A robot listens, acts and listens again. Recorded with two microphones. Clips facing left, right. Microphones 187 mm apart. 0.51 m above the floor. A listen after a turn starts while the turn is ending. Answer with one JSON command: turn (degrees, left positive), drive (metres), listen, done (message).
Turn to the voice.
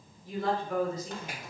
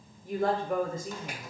{"turn": -50}
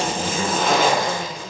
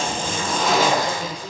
{"turn": -20}
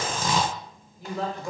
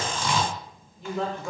{"done": "Facing the woman speaking."}